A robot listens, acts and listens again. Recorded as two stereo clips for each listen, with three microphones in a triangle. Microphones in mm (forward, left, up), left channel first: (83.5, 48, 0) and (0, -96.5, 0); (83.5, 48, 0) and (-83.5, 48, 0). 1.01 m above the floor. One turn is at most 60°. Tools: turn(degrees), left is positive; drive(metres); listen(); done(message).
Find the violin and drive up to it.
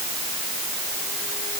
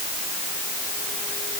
listen()
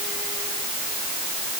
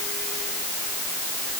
listen()
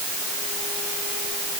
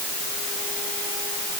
done("I can't make out a violin to turn to.")